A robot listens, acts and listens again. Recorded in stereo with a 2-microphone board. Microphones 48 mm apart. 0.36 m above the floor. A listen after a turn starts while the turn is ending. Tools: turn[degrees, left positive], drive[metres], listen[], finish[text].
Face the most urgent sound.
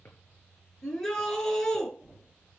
Action: turn[30]
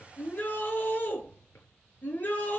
Thought: So it is at 140° left.
Action: turn[140]
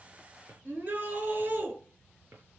Thought: The shout is now 40° right.
Action: turn[-40]
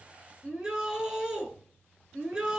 Thought: The shout is now 15° right.
Action: turn[-15]
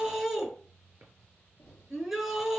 Action: finish[Found it: a shout, straight ahead, over 4 m away.]